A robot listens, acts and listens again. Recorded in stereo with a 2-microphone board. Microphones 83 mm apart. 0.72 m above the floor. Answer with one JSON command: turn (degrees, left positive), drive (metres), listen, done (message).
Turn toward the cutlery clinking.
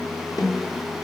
{"listen": true}
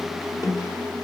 {"listen": true}
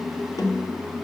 {"done": "I can't make out cutlery clinking to turn to."}